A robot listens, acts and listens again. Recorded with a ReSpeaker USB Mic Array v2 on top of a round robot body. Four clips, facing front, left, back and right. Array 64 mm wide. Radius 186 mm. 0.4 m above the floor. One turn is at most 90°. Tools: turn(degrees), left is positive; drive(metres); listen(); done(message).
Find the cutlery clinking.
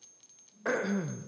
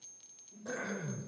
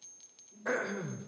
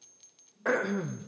listen()
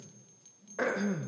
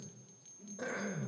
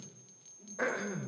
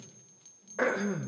listen()
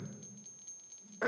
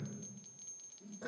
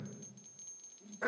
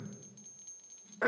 done("I can't make out cutlery clinking, only throat clearing.")